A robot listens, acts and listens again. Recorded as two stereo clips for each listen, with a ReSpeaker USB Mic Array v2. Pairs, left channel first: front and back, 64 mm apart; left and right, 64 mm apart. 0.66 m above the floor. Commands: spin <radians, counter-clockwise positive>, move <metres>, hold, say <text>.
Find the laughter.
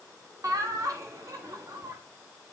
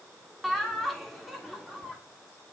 spin 3.14
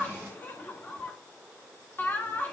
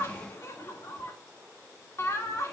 spin 0.87
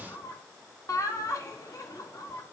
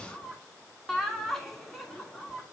say Facing the laughter, 2 to 4 m away.